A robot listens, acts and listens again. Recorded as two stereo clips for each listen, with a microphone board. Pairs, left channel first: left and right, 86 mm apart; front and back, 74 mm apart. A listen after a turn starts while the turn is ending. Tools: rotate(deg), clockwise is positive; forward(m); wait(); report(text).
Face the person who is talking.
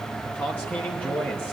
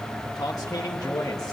rotate(-25)
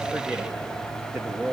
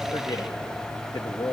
report("Facing the man speaking.")